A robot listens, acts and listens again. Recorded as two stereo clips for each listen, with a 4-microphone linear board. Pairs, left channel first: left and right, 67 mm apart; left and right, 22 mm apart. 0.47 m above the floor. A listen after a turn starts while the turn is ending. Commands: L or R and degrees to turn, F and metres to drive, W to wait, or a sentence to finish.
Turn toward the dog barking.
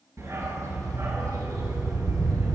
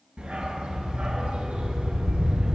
R75
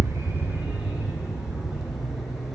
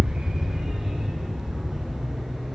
Facing the dog barking.